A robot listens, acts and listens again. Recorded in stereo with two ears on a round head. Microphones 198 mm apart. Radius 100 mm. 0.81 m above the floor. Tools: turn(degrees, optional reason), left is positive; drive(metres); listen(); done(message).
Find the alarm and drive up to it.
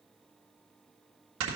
listen()
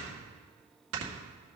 listen()
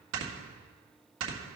done("I can't make out an alarm to turn to.")